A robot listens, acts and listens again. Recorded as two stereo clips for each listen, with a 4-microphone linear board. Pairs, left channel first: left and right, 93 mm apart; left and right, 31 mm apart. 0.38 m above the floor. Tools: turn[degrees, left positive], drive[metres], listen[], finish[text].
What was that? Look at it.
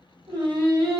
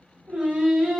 Thought: The singing: about 50° right or 130° right.
Action: turn[-50]
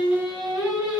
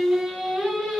Action: finish[Found it: singing, straight ahead.]